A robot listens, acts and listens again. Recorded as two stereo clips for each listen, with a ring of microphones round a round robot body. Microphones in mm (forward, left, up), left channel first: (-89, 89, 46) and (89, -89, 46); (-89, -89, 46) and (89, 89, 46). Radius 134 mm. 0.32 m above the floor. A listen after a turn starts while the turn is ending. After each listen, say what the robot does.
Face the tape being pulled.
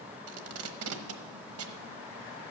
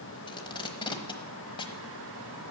Turn 65° right.
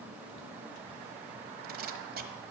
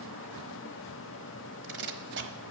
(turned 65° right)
Found it: tape being pulled, straight ahead, 1 to 2 m away.